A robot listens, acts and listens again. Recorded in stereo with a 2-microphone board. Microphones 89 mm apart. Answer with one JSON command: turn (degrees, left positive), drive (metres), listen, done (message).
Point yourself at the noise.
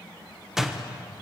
{"turn": -30}
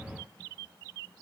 {"listen": true}
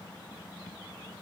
{"done": "I heard a door slam, but can't make it out now. It was about 25° left or 145° right."}